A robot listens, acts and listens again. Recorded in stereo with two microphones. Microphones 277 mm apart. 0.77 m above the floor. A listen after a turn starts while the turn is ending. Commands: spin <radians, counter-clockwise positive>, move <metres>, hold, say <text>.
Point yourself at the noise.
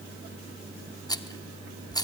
spin 0.52
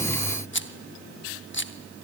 spin 2.36
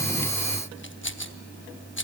spin 0.79
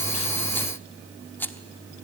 say Found it: a rattle, straight ahead, under 1 m away.